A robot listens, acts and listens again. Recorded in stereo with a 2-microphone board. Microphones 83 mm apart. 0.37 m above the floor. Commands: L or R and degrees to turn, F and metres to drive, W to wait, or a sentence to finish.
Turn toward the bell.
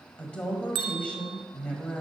R90
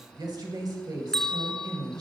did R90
Facing the bell.